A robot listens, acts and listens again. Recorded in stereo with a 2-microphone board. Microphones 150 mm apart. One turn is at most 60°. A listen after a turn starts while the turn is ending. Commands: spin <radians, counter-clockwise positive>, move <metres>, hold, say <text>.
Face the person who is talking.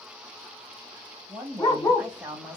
spin -0.52
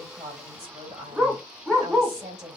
spin -1.05
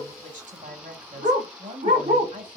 spin -1.05
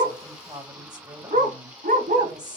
spin -0.52
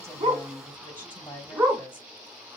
spin 0.26
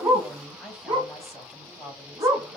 say Facing the woman speaking, 2 to 4 m away.